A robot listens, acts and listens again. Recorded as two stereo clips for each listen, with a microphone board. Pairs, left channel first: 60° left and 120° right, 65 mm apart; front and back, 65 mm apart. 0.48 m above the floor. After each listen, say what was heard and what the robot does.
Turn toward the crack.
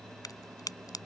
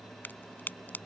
The crack: 60° left. Turn 60° left.
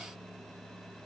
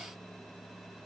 I heard a crack from this way, but can't make it out now.